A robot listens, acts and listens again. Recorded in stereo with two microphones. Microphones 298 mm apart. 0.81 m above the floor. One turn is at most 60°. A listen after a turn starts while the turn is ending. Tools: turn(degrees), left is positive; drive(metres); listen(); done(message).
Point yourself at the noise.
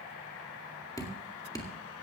turn(degrees=30)
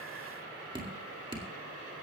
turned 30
turn(degrees=-15)
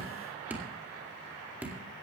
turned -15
done("Facing the dripping, 2 to 4 m away.")